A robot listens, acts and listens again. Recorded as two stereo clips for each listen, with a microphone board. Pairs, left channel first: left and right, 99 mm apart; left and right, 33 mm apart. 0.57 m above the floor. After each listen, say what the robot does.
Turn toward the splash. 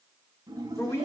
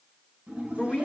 Turn 40° right.
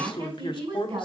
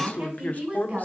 Keep listening.
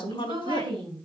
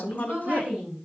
I heard a splash, but can't make it out now. It was about straight ahead or 100° right.